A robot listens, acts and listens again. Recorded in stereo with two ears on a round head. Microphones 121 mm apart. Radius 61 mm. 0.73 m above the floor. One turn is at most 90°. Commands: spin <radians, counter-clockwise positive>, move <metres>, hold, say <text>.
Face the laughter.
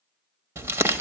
hold
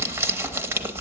hold
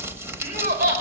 spin -1.57
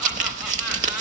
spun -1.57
hold
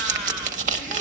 hold
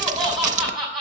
say Found it: laughter, straight ahead.